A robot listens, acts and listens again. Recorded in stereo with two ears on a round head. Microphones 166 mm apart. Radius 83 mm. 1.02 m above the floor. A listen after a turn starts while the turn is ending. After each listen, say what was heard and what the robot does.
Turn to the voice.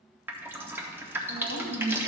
The woman speaking: about 55° right or 125° right. Turn 55° right.
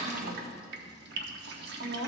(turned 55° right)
So it is at 70° right. Turn 70° right.
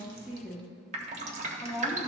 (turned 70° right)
Found it: a woman speaking, straight ahead, 1 to 2 m away.